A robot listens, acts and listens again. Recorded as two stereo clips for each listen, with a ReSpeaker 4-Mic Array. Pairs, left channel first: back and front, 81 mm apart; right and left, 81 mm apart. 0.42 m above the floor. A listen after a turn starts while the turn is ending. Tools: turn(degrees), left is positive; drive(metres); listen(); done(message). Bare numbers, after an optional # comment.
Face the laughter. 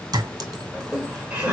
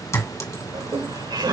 # The laughter: 75° left.
turn(75)
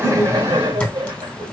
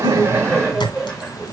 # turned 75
done("Facing the laughter.")